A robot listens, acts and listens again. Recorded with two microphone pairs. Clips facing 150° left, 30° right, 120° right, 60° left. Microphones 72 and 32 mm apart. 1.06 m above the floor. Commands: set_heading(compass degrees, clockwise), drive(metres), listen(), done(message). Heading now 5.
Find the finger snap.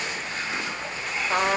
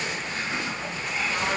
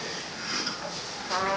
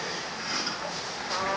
listen()
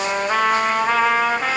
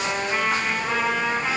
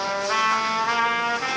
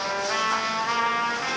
listen()
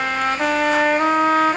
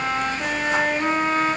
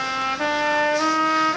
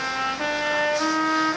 done("I can't make out a finger snap to turn to.")